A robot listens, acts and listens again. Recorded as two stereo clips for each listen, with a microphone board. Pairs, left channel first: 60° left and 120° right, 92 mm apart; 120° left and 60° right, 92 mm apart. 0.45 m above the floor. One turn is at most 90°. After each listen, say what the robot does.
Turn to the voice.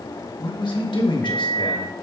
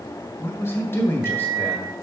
Turn 60° left.
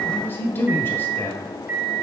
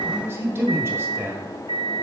Found it: a man speaking, straight ahead, 1 to 2 m away.